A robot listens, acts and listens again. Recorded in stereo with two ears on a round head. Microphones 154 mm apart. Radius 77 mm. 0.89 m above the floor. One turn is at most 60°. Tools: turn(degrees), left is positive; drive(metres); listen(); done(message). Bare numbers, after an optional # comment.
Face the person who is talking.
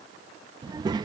# The child speaking: about 25° right or 155° right.
turn(-25)
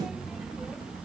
done("Facing the child speaking.")